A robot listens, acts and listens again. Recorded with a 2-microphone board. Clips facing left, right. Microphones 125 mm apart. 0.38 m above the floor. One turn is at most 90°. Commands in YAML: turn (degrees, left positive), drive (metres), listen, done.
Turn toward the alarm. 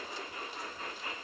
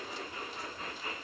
listen: true
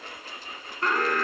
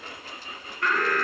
turn: 30
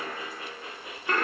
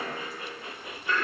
turn: 90
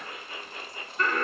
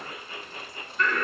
turn: 35
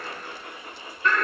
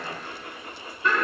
turn: -10
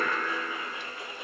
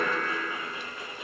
done: "Facing the alarm."